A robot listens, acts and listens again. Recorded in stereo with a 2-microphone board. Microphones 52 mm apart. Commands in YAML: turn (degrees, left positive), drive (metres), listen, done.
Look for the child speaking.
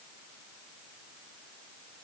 listen: true
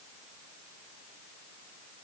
listen: true
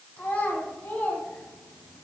turn: 30
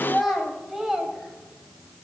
done: "Found it: a child speaking, straight ahead, 1 to 2 m away."